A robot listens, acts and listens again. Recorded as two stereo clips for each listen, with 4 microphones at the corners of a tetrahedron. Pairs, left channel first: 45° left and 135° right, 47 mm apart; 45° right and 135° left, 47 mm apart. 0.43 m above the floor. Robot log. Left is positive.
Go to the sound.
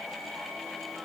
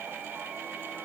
cmd idle
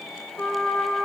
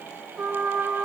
note: The trumpet: 80° left.
cmd yaw +80
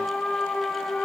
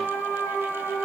note: The trumpet is now 20° right.
cmd yaw -20
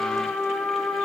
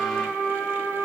cmd fwd 1.0
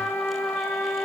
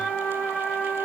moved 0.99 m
note: The trumpet is now 15° left.
cmd yaw +15
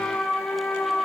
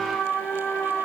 cmd fwd 1.0
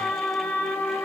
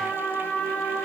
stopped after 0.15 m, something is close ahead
end: I am next to the trumpet.